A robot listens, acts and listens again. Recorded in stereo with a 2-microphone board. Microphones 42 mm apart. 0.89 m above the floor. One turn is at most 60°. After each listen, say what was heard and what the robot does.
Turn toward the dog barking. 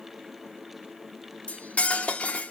Keep listening.
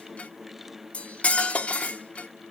Keep listening.
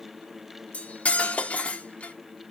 I can't make out a dog barking, only cutlery clinking.